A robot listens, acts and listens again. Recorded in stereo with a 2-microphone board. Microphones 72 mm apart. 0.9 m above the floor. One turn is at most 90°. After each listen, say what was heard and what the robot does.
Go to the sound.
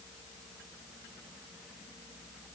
Keep listening.
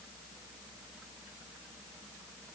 Keep listening.
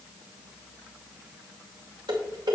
Turn 90° right.
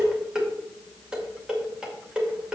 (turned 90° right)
So it is at 10° right. Turn 10° right.
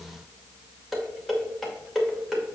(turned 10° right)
Drive 1.0 m forward.
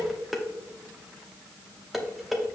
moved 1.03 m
Drive 1.0 m forward.
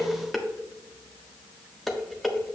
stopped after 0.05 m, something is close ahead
I am next to the dishes clattering.